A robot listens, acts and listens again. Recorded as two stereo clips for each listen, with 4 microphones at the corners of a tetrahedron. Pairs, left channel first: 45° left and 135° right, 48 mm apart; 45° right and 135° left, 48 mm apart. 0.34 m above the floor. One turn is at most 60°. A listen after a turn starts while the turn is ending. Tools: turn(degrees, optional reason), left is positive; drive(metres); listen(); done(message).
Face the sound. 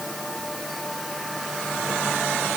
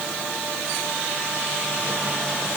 listen()
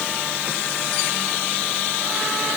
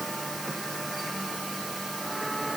listen()
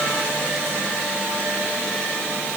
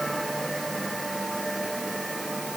done("I can't make out anything to turn to.")